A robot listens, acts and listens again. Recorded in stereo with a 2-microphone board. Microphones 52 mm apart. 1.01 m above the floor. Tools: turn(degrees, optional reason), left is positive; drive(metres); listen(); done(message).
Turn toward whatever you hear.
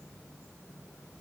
listen()
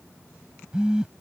turn(degrees=-15, reason="The phone buzzing: about 15° right or 165° right.")
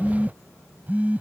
turn(degrees=-145, reason="So it is at 145° right.")
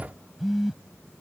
done("Facing the phone buzzing.")